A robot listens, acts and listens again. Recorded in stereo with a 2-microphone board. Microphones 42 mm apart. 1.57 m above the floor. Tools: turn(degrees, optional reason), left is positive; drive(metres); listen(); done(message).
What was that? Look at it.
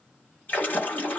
turn(degrees=45, reason="The splash: about 45° left or 135° left.")
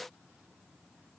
listen()
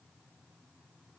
done("I heard a splash, but can't make it out now. It was about straight ahead or 90° left.")